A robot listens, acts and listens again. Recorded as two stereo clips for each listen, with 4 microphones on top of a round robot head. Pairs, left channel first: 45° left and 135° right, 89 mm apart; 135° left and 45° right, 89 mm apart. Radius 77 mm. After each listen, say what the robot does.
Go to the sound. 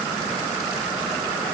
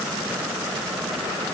Keep listening.
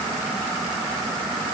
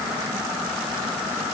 Keep listening.
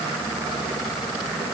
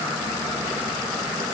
I can't make out anything to turn to.